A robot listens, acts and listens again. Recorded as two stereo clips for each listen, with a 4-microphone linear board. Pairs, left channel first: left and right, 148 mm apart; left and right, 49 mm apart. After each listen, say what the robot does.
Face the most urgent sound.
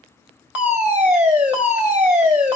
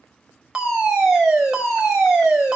Turn 30° right.
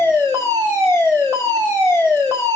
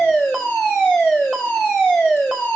Turn 20° left.
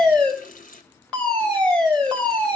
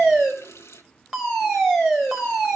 Turn 10° left.
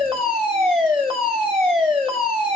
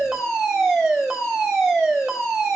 Facing the fire alarm.